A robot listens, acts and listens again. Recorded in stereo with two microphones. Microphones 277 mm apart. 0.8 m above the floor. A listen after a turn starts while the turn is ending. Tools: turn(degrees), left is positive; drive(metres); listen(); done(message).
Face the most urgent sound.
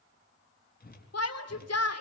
turn(degrees=65)
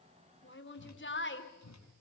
turn(degrees=45)
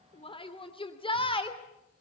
turn(degrees=20)
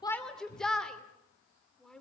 done("Facing the shout, 2 to 4 m away.")